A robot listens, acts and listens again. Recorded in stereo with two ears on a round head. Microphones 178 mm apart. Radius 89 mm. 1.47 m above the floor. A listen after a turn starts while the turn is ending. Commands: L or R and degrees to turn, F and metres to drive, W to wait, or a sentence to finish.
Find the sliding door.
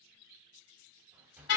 R30
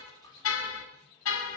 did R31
L20
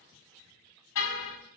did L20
W
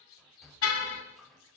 Facing the sliding door.